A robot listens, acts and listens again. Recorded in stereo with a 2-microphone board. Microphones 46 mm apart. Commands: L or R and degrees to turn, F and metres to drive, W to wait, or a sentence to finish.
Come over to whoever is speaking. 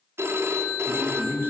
R45
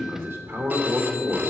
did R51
R80
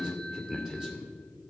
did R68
R10
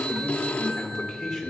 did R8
F1.0
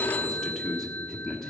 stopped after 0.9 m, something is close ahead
Arrived at the man speaking, straight ahead.